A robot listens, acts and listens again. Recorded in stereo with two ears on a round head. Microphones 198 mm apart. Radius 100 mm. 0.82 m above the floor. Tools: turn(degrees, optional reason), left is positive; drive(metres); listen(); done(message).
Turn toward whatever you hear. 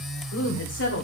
turn(degrees=55, reason="The woman speaking: about 55° left or 125° left.")
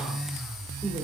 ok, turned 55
listen()
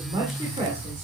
turn(degrees=-30, reason="So it is at 30° right.")
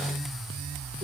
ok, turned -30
listen()
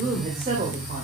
turn(degrees=-35, reason="The woman speaking is now 35° right.")
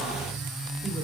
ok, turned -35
listen()
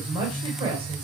turn(degrees=-25, reason="The woman speaking is now 25° right.")
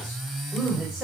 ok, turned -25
done("Facing the woman speaking.")